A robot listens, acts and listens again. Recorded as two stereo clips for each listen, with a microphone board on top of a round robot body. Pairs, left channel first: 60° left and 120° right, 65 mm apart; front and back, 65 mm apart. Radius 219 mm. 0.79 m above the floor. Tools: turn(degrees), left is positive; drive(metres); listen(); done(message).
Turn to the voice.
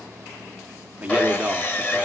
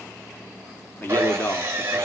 turn(degrees=-50)
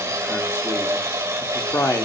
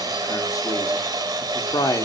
turn(degrees=15)
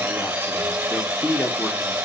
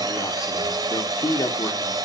done("Found it: a man speaking, straight ahead, 1 to 2 m away.")